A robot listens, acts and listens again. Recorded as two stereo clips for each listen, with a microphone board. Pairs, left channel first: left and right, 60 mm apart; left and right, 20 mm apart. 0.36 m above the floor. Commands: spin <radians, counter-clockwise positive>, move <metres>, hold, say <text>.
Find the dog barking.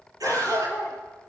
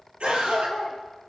spin 0.61
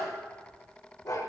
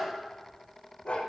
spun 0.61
spin 1.83
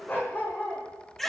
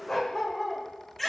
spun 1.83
spin 0.52
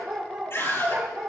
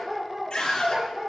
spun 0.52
spin -0.17
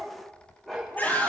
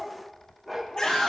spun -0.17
say Found it: a dog barking, straight ahead.